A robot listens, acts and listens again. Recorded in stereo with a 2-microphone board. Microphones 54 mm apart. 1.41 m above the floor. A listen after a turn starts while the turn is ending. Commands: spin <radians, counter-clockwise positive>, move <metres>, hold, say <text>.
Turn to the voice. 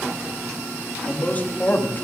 spin 0.61
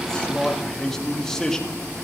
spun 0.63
spin 0.17
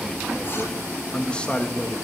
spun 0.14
spin 0.44
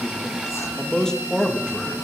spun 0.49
spin 0.17
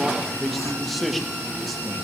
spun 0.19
say Facing the man speaking.